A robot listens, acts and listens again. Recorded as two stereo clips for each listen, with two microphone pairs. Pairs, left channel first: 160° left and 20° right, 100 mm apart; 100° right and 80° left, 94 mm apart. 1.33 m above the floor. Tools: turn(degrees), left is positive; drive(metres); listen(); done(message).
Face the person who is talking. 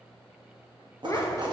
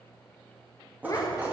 turn(degrees=-150)
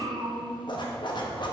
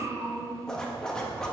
turn(degrees=20)
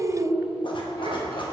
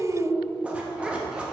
done("Facing the child speaking, under 1 m away.")